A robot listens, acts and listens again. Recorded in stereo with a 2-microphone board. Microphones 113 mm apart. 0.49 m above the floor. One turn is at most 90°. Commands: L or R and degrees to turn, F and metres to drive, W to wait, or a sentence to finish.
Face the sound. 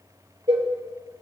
R60
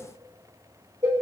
R50
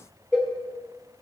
Facing the cowbell, 2 to 4 m away.